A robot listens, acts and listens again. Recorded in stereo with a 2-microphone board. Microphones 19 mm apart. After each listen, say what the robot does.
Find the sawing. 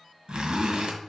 Keep listening.
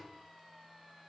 Keep listening.
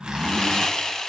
Turn 40° left.
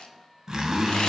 Keep listening.
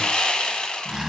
Turn 100° left.
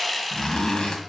Found it: sawing, straight ahead, under 1 m away.